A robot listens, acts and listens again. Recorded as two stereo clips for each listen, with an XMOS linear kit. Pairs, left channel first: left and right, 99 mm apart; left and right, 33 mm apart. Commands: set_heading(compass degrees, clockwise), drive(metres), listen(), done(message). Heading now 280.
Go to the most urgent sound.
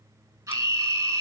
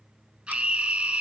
set_heading(315)
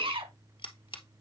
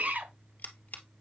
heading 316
set_heading(66)
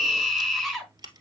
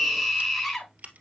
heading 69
drive(1.0)
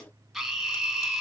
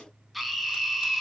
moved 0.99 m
drive(1.0)
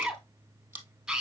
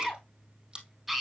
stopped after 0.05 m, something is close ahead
done("Something is in my way. I am facing the scream but have not reached it.")